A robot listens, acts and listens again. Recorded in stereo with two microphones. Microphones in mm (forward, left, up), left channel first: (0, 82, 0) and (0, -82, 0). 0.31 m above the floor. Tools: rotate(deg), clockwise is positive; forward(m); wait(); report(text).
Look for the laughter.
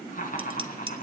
rotate(-55)
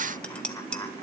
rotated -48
wait()
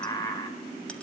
rotate(-25)
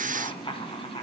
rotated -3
rotate(-35)
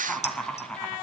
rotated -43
report("Facing the laughter.")